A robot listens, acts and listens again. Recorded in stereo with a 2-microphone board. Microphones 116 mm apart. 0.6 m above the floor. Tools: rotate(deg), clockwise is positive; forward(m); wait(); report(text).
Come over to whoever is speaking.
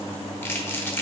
wait()
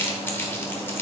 wait()
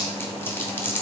report("I can't make out anyone speaking to turn to.")